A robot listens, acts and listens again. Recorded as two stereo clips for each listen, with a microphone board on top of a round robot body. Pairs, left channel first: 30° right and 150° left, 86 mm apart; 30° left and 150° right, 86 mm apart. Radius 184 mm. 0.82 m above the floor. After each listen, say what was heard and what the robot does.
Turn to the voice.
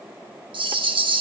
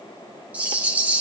Keep listening.
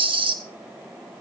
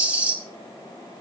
Keep listening.
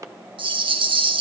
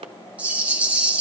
I can't make out anyone speaking to turn to.